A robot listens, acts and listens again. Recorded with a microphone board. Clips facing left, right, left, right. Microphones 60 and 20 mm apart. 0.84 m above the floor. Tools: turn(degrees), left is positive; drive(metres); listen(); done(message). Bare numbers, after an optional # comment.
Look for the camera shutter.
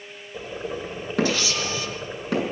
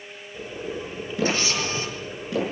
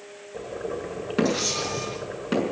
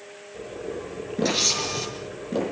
# The camera shutter: about 35° right or 145° right.
turn(-35)
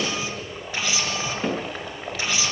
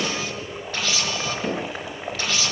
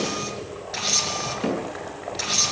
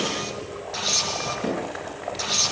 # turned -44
# So it is at 15° left.
turn(15)
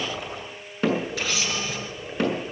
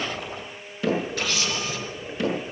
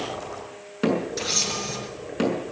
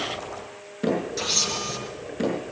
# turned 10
done("Facing the camera shutter.")